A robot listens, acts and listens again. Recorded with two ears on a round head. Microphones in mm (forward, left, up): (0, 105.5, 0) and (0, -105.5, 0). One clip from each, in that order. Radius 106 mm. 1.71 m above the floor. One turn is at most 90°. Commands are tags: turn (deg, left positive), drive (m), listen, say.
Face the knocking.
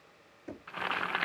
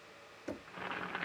<turn deg="-45"/>
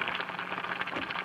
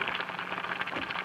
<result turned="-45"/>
<listen/>
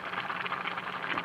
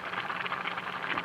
<listen/>
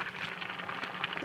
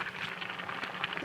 <say>I heard knocking, but can't make it out now. It was about straight ahead or 90° right.</say>